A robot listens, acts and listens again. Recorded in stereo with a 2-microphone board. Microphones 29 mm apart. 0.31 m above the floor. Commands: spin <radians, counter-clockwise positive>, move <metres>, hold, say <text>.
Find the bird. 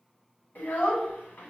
hold
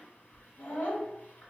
hold
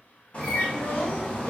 spin 0.61
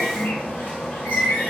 spin 1.83
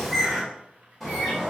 say Facing the bird, 1 to 2 m away.